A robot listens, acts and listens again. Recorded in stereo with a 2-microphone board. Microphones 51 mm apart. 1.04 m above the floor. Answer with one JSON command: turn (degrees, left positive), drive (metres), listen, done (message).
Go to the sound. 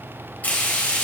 {"turn": 30}
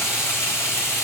{"turn": 115}
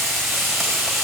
{"drive": 1.0}
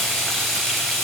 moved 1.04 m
{"drive": 1.0}
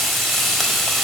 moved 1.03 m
{"drive": 1.0}
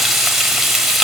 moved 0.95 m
{"turn": -10}
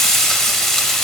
{"drive": 1.0}
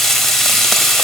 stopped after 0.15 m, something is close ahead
{"done": "I am next to the frying."}